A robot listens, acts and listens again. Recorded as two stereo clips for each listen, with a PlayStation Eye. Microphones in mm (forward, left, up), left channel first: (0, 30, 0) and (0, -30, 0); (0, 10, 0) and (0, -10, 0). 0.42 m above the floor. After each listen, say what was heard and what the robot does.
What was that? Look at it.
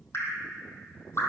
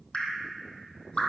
The dripping: about 50° left or 130° left. Turn 50° left.
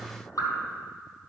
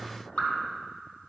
So it is at 80° left. Turn 80° left.
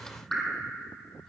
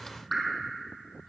The dripping is now 10° left. Turn 10° left.
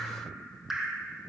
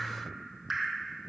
Facing the dripping, 2 to 4 m away.